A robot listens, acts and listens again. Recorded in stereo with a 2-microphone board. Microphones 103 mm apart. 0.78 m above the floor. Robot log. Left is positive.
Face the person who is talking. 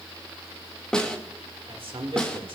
note: The man speaking: about 55° right or 125° right.
cmd yaw -55
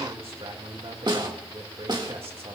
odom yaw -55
note: So it is at 65° right.
cmd yaw -65
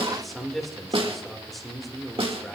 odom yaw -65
end: Found it: a man speaking, straight ahead, 1 to 2 m away.